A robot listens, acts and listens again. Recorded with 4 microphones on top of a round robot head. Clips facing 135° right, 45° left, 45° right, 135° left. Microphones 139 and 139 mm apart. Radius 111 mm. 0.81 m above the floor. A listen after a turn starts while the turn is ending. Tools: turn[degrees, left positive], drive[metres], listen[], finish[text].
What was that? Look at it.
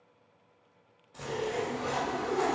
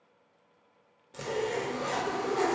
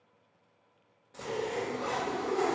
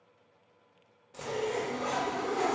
Thought: The zipper: 55° left.
Action: turn[55]
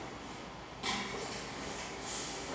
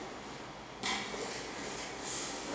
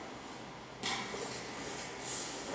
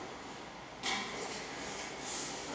Action: finish[Found it: a zipper, straight ahead.]